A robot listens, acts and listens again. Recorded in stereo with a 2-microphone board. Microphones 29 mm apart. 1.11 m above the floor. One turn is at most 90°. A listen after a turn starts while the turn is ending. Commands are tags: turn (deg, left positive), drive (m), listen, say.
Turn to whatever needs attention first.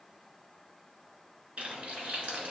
<listen/>
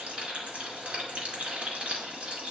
<listen/>
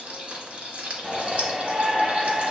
<turn deg="-35"/>
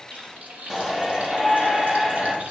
<turn deg="-10"/>
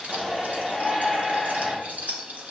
<say>Facing the shout.</say>